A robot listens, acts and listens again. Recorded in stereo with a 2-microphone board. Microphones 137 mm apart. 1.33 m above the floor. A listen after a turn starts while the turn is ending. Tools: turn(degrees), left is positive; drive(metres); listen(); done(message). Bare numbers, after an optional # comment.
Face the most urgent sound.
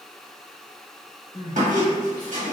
# The crying: about 30° left or 150° left.
turn(30)
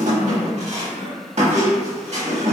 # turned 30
# So it is at 115° left.
turn(115)
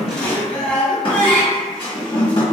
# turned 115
# The crying is now 10° left.
turn(10)
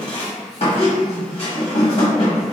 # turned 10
listen()
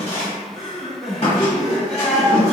done("Facing the crying, 1 to 2 m away.")